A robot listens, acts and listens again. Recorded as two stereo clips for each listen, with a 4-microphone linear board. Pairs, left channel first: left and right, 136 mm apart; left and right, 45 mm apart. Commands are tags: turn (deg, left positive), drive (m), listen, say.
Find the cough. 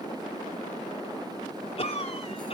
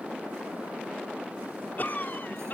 <turn deg="50"/>
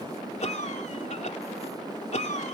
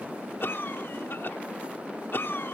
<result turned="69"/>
<turn deg="60"/>
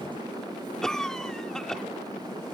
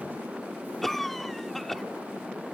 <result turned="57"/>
<say>Found it: a cough, straight ahead.</say>